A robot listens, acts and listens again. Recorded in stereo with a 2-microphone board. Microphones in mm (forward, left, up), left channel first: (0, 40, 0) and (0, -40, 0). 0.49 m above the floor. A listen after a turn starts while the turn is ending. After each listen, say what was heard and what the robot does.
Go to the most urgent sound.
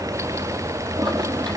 Keep listening.
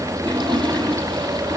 Keep listening.
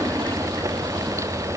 I can't make out anything urgent to turn to.